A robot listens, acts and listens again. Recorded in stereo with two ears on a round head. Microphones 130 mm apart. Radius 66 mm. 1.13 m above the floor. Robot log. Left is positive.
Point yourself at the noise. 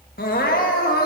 note: The crying: about 70° left or 110° left.
cmd yaw +70
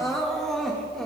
end: Found it: crying, straight ahead.